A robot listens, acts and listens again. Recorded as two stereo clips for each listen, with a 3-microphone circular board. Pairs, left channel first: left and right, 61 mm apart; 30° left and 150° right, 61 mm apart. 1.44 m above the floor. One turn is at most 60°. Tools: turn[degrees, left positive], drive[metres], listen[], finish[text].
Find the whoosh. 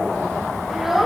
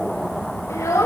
Action: listen[]
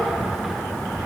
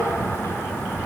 Action: listen[]
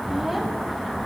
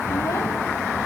Action: finish[I can't make out a whoosh to turn to.]